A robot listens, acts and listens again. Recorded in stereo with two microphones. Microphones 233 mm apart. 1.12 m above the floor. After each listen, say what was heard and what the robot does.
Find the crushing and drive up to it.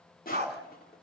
The crushing: about 40° left or 140° left. Turn 40° left.
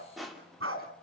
Drive 1.0 m forward.
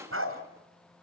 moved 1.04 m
The crushing is now 10° right. Turn 10° right.
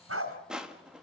Drive 1.0 m forward.
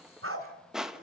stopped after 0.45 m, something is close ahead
Arrived at the crushing, straight ahead.